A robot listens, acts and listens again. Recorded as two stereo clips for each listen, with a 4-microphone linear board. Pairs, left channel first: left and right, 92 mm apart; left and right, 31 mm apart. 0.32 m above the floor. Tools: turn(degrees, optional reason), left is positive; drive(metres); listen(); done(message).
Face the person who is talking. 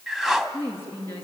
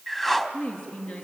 turn(degrees=25, reason="The woman speaking: about 25° left or 155° left.")
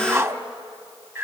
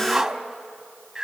listen()
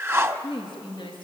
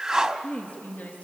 turn(degrees=130, reason="So it is at 130° left.")
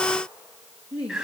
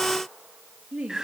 turn(degrees=-15, reason="The woman speaking is now 15° right.")
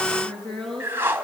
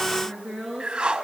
done("Facing the woman speaking.")